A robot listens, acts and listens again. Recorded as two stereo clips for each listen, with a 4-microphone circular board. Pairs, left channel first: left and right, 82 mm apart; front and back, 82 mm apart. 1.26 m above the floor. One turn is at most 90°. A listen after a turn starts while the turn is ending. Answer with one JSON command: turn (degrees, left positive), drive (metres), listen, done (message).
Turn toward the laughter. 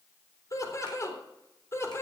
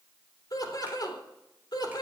{"turn": 35}
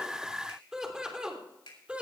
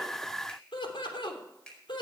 {"turn": -15}
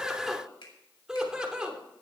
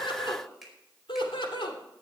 {"turn": -15}
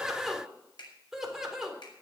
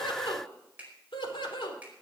{"done": "Found it: laughter, straight ahead."}